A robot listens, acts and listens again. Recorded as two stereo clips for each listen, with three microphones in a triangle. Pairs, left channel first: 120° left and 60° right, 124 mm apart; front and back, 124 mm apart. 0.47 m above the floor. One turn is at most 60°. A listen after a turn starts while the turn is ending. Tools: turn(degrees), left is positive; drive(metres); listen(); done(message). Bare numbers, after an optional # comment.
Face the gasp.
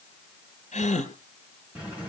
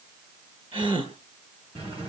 # The gasp: 135° left.
turn(60)
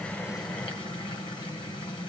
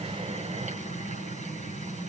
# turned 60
# Nothing new. It was at 75° left.
turn(60)
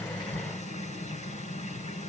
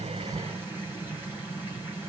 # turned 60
# Nothing new. It was at 15° left.
turn(15)
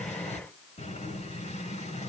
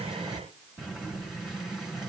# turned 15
done("I heard a gasp from this way, but can't make it out now.")